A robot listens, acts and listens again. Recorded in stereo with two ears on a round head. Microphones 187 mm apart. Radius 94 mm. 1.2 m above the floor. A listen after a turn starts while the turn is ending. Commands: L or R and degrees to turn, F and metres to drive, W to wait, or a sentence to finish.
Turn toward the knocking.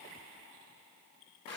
W
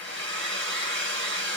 W
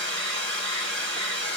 I can't make out knocking to turn to.